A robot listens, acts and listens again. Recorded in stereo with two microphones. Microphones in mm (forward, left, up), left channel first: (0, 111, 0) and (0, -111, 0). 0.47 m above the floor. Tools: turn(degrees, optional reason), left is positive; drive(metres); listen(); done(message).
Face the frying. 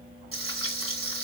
turn(degrees=-70, reason="The frying: about 70° right or 110° right.")
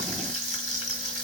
turn(degrees=-35, reason="So it is at 35° right.")
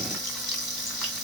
done("Facing the frying, 2 to 4 m away.")